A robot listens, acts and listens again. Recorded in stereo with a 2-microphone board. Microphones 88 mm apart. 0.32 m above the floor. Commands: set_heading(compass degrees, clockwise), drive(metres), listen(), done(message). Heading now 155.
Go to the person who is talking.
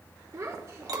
set_heading(190)
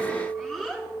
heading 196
drive(1.0)
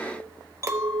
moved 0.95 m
listen()
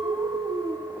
set_heading(186)
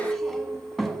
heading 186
drive(1.0)
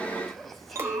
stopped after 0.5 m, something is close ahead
listen()
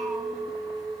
listen()
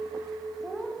done("I am next to the child speaking.")